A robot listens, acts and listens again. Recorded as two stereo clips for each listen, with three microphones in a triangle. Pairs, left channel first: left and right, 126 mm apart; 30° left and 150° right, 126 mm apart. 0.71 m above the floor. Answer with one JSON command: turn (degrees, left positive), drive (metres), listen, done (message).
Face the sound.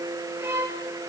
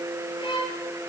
{"turn": -20}
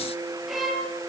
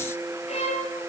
{"done": "Found it: a violin, straight ahead, 2 to 4 m away."}